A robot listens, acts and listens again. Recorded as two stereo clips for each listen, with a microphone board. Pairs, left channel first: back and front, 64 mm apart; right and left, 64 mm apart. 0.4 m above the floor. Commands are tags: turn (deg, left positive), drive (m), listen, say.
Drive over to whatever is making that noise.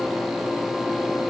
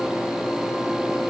<listen/>
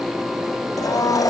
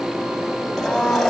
<turn deg="180"/>
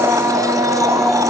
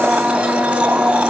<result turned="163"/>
<turn deg="20"/>
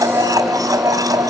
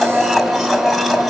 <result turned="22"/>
<drive m="1.0"/>
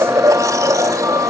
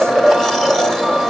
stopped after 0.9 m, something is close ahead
<say>I am next to the blender.</say>